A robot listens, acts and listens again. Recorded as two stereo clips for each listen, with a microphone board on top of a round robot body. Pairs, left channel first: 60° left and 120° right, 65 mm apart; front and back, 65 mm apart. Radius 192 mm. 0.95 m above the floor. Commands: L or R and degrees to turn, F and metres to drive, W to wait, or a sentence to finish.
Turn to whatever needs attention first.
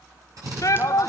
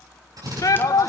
L30
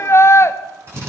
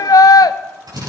L15
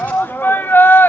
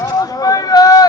Found it: a shout, straight ahead, 1 to 2 m away.